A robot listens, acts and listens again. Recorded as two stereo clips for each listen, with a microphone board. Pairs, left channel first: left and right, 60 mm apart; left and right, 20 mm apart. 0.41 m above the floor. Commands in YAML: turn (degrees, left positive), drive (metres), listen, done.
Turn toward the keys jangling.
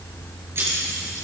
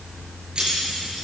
turn: -45
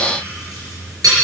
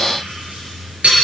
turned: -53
turn: -80
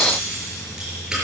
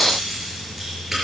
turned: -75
listen: true
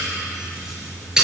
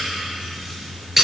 turn: -10
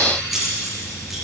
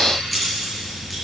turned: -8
done: "Facing the keys jangling."